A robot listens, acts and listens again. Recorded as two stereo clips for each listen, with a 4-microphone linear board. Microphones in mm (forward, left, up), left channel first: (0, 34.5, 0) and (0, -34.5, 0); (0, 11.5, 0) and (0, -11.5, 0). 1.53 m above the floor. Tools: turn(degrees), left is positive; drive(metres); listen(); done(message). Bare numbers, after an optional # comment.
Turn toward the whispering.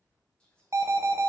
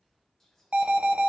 turn(30)
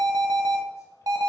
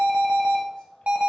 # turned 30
listen()
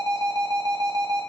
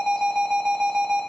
listen()
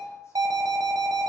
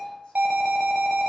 done("I heard whispering, but can't make it out now. It was about 15° right or 135° left.")